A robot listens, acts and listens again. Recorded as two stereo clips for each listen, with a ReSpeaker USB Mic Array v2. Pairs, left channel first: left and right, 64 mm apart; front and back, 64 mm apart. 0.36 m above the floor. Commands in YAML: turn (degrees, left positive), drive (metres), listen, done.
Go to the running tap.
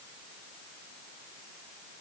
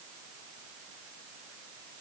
listen: true
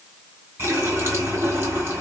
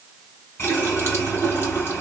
turn: -45
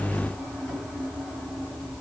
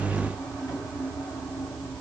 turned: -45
drive: 1.0
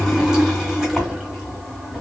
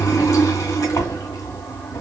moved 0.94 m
turn: -10
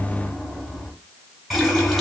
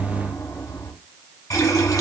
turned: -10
drive: 1.0
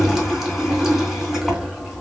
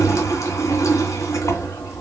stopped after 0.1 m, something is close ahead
done: "Arrived at the running tap, straight ahead."